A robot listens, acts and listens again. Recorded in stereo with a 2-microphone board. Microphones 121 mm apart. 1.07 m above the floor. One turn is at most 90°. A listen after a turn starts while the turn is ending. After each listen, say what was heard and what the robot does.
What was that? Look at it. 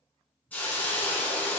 Turn 30° left.
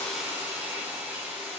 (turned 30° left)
So it is at 15° right. Turn 15° right.
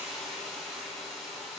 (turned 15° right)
Facing the hiss.